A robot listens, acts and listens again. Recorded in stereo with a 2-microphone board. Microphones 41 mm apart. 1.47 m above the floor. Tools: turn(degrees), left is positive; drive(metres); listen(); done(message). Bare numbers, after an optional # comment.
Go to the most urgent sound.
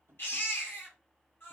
# The baby crying: about 60° left or 120° left.
turn(60)
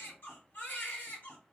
# So it is at 60° left.
turn(60)
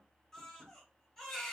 # The baby crying is now 15° left.
turn(15)
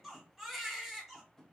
drive(1.0)
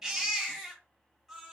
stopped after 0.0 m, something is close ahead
# The baby crying is now 10° right.
turn(-10)
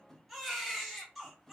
done("Blocked. The baby crying is further on, straight ahead.")